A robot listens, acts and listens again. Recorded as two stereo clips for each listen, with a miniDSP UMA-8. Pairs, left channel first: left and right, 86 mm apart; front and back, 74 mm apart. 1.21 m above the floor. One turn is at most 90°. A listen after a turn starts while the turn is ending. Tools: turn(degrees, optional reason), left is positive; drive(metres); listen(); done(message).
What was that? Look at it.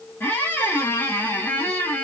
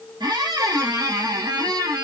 turn(degrees=90, reason="The squeak: 155° left.")
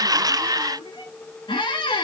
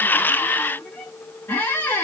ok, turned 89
turn(degrees=65, reason="The squeak is now 65° left.")
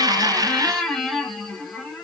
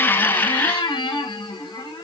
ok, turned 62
done("Facing the squeak.")